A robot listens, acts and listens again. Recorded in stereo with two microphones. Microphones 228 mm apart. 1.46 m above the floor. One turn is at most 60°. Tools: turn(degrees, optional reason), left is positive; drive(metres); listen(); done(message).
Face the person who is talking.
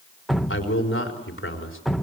turn(degrees=60, reason="The man speaking: about 60° left or 120° left.")
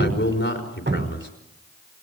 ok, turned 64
turn(degrees=55, reason="So it is at 55° left.")
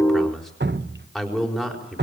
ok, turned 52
done("Found it: a man speaking, straight ahead, over 4 m away.")